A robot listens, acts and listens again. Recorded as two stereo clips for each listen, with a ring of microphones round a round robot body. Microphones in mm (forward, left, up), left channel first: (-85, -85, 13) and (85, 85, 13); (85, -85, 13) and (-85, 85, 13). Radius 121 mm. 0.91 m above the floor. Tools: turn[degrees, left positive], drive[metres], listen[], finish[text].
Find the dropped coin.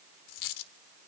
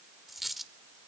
Thought: The dropped coin: 135° right.
Action: turn[-135]
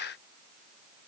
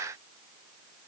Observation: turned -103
Thought: Nothing new. It was at 30° right.
Action: turn[-30]
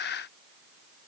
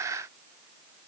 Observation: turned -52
Thought: Nothing new. It was at 20° left.
Action: turn[20]
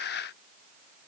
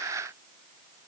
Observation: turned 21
Action: finish[Facing where the dropped coin came from. I can't hear it now.]